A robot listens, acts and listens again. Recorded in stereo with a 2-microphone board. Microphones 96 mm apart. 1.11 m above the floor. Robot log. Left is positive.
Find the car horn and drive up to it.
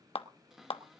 cmd idle
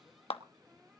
cmd idle
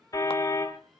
note: The car horn: about 40° left or 140° left.
cmd yaw +40
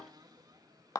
cmd idle
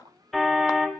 cmd fwd 1.0
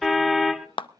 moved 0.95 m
cmd fwd 1.0
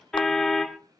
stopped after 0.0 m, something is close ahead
end: I am next to the car horn.